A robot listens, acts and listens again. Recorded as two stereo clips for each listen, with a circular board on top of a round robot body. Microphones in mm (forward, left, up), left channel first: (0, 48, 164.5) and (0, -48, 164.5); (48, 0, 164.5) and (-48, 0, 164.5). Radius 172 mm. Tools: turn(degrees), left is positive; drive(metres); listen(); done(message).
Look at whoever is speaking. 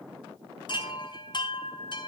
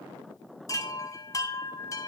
listen()
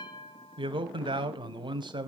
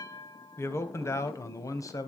turn(degrees=-55)
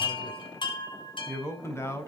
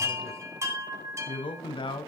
turn(degrees=30)
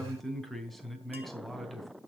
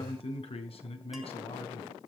done("Facing the man speaking.")